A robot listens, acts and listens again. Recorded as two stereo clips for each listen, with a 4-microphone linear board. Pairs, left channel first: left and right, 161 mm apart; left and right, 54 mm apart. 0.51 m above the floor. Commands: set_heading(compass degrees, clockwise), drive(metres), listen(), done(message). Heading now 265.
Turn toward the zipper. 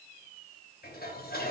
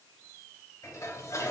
listen()
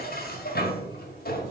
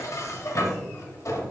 listen()
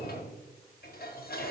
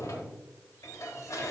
done("I can't make out a zipper to turn to.")